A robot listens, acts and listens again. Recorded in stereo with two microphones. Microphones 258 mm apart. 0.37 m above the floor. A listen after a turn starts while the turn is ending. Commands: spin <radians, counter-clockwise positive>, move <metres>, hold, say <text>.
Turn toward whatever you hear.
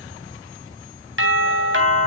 spin -0.87
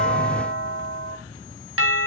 spin -1.31
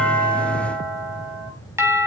spin -0.17
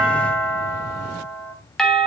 say Facing the doorbell, 2 to 4 m away.